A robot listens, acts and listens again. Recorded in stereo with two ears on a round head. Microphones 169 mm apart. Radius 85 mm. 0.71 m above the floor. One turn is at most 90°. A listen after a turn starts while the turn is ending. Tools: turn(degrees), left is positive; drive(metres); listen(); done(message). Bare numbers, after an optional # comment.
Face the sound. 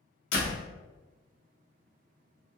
turn(90)
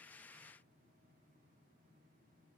done("Facing where the door slam came from. I can't hear it now.")